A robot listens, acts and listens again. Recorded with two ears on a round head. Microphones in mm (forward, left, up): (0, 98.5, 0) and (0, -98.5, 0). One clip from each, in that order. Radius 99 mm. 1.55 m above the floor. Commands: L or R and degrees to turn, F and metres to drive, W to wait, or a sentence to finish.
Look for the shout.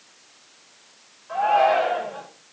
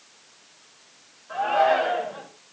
L20
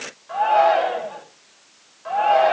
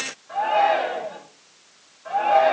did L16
L145
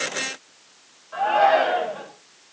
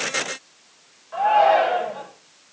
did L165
R25
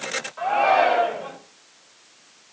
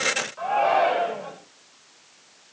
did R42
L15
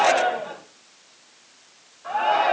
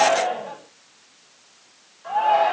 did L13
Found it: a shout, straight ahead.